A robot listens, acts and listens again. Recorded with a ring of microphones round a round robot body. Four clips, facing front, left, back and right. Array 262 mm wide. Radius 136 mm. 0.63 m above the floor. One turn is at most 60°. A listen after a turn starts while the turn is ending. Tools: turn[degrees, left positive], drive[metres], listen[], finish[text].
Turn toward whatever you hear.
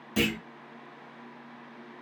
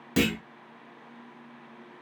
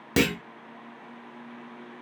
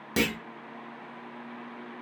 Thought: The clunk: 175° right.
Action: turn[-60]
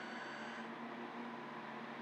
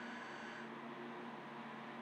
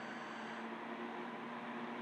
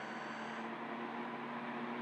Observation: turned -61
Thought: Nothing new. It was at 115° right.
Action: turn[-60]
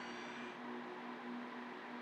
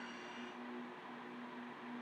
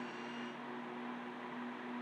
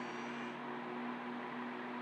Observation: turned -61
Thought: Nothing new. It was at 55° right.
Action: turn[-55]
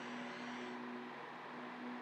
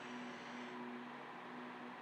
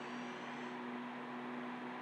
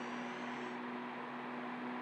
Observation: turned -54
Action: finish[Facing where the clunk came from. I can't hear it now.]